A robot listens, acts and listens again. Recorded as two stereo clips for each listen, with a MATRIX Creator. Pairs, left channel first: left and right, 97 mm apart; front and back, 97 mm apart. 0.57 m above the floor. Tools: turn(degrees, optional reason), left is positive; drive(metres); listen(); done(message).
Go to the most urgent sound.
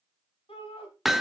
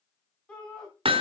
turn(degrees=80, reason="The shout: 80° left.")
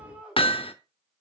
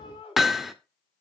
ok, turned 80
turn(degrees=-10, reason="The shout is now 10° right.")
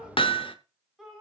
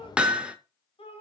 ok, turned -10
drive(metres=1.0)
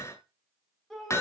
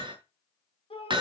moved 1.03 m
drive(metres=1.0)
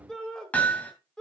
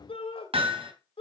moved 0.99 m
drive(metres=1.0)
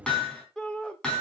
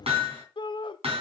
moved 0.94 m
turn(degrees=10, reason="The shout is now 10° left.")
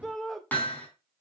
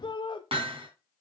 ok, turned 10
drive(metres=1.0)
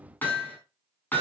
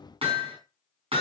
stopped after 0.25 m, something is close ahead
listen()
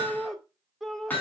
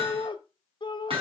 done("Arrived at the shout, straight ahead.")